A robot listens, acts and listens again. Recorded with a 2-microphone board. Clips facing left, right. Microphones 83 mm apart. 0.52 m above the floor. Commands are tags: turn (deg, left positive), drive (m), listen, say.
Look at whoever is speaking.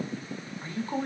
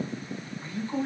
<turn deg="55"/>
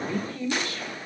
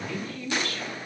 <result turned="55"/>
<turn deg="20"/>
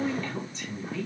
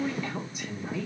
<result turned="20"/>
<turn deg="-20"/>
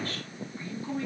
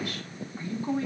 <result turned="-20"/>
<turn deg="-30"/>
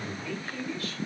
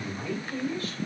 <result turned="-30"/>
<turn deg="-25"/>
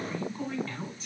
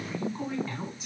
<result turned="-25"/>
<turn deg="-10"/>
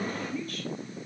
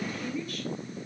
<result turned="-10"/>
<say>Facing the woman speaking.</say>